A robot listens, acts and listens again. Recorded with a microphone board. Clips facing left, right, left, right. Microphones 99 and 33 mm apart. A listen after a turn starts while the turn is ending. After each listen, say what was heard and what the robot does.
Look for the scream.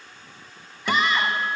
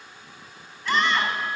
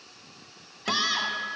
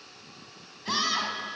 Turn 30° left.
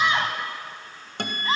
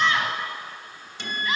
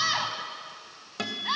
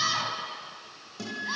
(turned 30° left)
So it is at 145° left. Turn 145° left.
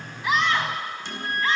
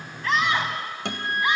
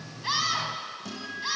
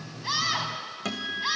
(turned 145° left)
The scream is now 15° right. Turn 15° right.
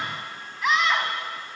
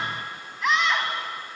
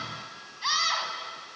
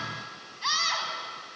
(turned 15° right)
Facing the scream, 2 to 4 m away.